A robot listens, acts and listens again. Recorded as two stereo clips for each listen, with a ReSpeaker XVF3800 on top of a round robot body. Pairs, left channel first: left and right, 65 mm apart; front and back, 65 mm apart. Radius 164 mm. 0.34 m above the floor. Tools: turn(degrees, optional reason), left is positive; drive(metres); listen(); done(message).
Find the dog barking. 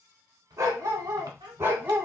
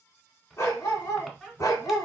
turn(degrees=-30, reason="The dog barking: 30° right.")
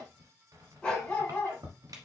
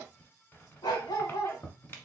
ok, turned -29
turn(degrees=25, reason="The dog barking is now 25° left.")
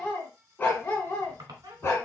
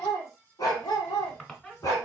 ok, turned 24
turn(degrees=40, reason="The dog barking is now 40° left.")
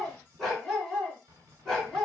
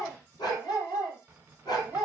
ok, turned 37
done("Found it: a dog barking, straight ahead, 2 to 4 m away.")